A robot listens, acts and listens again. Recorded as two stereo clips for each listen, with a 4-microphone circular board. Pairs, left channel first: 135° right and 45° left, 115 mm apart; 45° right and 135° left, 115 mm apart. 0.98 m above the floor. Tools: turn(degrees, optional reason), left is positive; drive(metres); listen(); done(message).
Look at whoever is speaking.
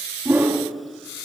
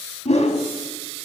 listen()
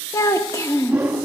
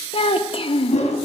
turn(degrees=-75, reason="The child speaking: 75° right.")
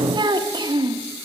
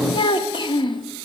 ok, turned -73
done("Facing the child speaking.")